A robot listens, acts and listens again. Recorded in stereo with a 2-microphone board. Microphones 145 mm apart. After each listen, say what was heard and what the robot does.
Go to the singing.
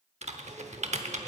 Keep listening.
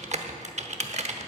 Keep listening.
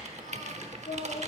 Turn 90° left.
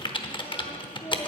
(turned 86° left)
So it is at 15° left. Turn 15° left.
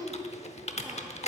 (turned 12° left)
Drive 1.0 m forward.
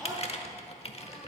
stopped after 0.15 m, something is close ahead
Keep listening.
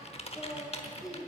Blocked. The singing is further on, straight ahead.